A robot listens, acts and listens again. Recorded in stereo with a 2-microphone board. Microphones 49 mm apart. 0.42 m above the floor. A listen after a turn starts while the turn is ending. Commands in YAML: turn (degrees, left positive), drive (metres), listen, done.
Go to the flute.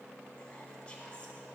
listen: true
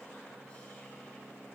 listen: true
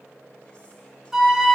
turn: -30
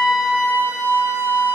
turn: -140
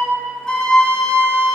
turn: 15
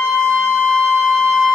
drive: 1.0
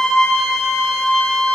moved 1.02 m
turn: 15
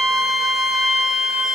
drive: 1.0
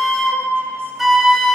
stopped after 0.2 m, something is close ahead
done: "Arrived at the flute, straight ahead."